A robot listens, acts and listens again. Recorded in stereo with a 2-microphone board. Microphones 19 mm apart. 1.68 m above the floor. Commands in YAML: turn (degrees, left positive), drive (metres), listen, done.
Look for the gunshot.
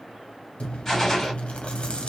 turn: 30
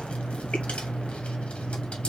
listen: true
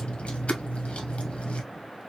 done: "I heard a gunshot, but can't make it out now. It was about 15° right or 135° left."